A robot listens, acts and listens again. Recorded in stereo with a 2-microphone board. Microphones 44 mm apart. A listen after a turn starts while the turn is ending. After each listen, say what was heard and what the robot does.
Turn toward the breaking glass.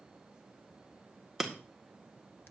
Turn 30° right.
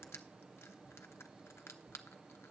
Keep listening.
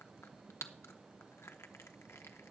I heard breaking glass, but can't make it out now. It was about 25° left or 145° right.